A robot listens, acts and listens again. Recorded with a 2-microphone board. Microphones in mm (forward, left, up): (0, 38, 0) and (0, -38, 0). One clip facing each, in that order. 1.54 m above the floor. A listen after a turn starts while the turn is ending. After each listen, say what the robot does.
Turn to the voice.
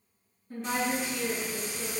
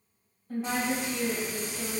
Turn 60° right.
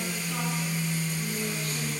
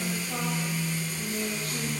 Turn 60° right.
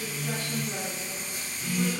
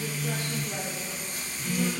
Keep listening.
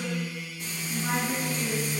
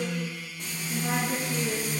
Turn 20° right.
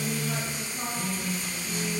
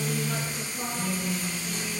Keep listening.
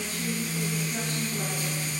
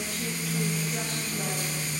Keep listening.
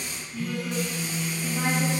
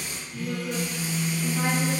Facing where the woman speaking came from. I can't hear it now.